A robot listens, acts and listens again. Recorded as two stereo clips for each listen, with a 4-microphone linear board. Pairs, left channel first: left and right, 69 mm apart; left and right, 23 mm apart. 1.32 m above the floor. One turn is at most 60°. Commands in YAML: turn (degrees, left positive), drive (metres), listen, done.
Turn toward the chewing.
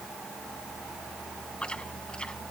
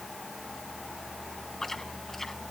turn: 15
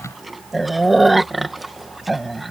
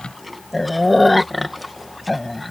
done: "Facing the chewing."